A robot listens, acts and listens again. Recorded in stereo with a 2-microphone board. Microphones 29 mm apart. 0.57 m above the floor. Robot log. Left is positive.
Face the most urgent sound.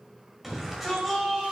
cmd yaw -30
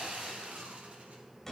note: So it is at 15° left.
cmd yaw +15
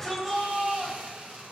end: Facing the shout, 2 to 4 m away.